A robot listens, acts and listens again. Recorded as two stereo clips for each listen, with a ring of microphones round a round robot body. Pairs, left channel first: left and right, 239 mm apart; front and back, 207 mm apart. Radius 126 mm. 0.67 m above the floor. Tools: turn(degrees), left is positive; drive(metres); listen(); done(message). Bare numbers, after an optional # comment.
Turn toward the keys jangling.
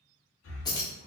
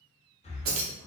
# The keys jangling: 165° left.
turn(165)
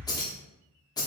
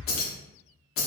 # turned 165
# The keys jangling is now 15° left.
turn(15)
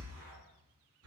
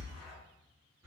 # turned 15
listen()
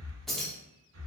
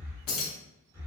done("Facing the keys jangling, under 1 m away.")